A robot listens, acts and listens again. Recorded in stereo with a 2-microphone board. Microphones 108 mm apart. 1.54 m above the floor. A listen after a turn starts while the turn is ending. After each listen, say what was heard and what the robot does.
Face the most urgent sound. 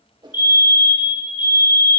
The fire alarm: about 45° left or 135° left. Turn 45° left.
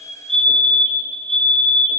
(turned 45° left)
Found it: a fire alarm, straight ahead.